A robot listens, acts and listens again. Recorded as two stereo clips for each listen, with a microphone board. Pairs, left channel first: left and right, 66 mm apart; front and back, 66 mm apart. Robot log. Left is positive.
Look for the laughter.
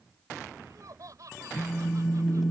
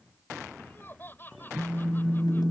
note: The laughter: 60° right.
cmd yaw -60
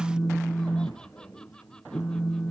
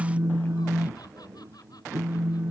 cmd idle
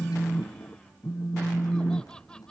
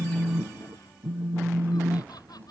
cmd idle
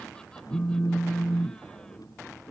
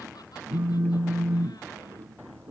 end: I heard laughter from this way, but can't make it out now.